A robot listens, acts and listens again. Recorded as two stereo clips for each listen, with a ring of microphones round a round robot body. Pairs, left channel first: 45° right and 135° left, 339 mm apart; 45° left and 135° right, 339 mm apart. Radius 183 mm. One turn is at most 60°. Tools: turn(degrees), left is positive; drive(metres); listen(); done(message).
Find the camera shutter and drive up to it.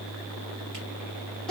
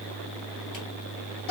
listen()
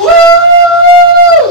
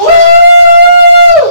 listen()
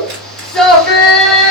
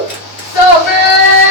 done("I can't make out a camera shutter, only a shout.")